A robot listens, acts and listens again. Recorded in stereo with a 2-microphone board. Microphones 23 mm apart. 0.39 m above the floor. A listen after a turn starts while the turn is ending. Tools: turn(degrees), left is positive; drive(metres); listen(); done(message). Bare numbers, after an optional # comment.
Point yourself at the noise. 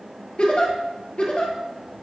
# The giggle: about 45° left or 135° left.
turn(45)
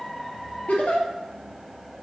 # So it is at 90° left.
turn(90)
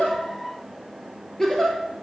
# The giggle is now 20° left.
turn(20)
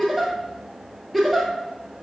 done("Found it: a giggle, straight ahead.")